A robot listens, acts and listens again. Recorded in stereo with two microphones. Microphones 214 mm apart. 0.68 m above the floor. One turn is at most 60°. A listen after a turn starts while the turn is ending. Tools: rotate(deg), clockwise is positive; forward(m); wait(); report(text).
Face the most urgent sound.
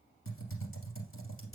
wait()
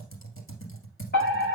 rotate(-45)
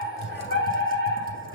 rotate(-60)
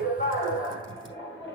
rotate(-20)
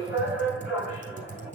report("Facing the fire alarm, over 4 m away.")